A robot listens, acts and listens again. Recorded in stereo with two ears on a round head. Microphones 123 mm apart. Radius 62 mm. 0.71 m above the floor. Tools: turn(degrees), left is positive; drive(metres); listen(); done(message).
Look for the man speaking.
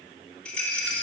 listen()
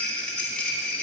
listen()
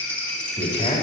turn(degrees=40)
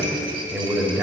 turn(degrees=-15)
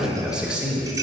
turn(degrees=-10)
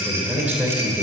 turn(degrees=-10)
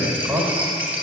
done("Found it: a man speaking, straight ahead, 2 to 4 m away.")